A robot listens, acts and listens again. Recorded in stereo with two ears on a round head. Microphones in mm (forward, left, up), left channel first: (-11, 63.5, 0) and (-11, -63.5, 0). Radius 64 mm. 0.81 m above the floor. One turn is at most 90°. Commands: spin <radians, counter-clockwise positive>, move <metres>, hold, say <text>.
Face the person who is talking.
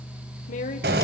spin 1.05
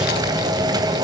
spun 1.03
hold
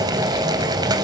hold
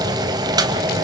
say I heard a woman speaking, but can't make it out now. It was about straight ahead or 65° left.